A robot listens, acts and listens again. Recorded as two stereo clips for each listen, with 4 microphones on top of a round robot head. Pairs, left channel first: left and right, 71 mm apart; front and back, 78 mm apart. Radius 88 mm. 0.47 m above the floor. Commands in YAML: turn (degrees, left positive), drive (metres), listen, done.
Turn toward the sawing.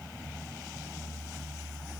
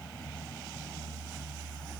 listen: true
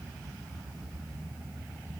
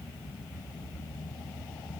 listen: true
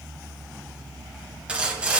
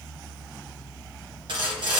turn: -165
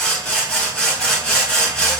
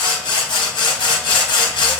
turn: 10
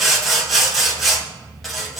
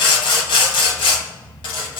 done: "Facing the sawing."